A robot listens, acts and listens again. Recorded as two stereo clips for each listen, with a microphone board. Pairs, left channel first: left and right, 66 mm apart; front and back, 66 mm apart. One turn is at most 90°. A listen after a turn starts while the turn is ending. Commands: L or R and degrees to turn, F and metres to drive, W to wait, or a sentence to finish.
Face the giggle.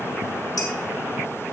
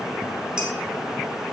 W
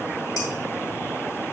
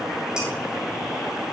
W
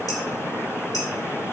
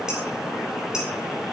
I can't make out a giggle to turn to.